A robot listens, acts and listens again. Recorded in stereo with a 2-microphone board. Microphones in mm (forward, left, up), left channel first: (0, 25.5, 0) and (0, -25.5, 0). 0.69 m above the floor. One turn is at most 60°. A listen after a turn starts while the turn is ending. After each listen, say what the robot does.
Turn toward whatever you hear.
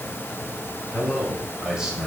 Turn 30° right.
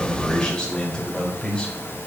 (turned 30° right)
Turn 20° left.
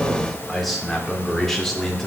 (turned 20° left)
Turn 10° left.
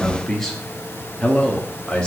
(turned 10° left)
Turn 20° left.
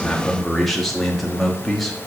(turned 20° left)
Facing the man speaking, 1 to 2 m away.